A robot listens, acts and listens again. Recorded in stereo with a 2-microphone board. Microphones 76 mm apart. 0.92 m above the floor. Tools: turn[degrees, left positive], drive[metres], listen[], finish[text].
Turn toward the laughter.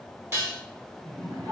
Thought: The laughter: about 55° right or 125° right.
Action: turn[-55]
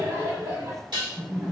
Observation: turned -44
Thought: So it is at 65° right.
Action: turn[-65]
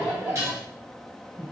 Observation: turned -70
Thought: The laughter is now 10° right.
Action: turn[-10]
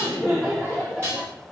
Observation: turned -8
Thought: The laughter is now 10° right.
Action: turn[-10]
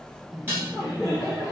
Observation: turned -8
Action: finish[Facing the laughter, 2 to 4 m away.]